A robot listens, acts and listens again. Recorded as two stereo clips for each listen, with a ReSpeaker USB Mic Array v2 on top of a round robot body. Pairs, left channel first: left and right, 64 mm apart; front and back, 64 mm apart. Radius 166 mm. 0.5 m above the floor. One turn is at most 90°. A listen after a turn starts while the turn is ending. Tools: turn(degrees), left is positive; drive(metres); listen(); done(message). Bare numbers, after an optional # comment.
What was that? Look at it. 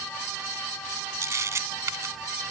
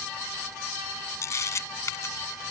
# The camera shutter: 45° right.
turn(-45)
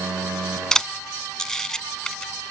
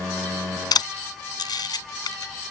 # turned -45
# The camera shutter is now 10° left.
turn(10)
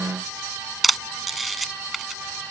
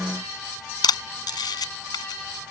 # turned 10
done("Facing the camera shutter.")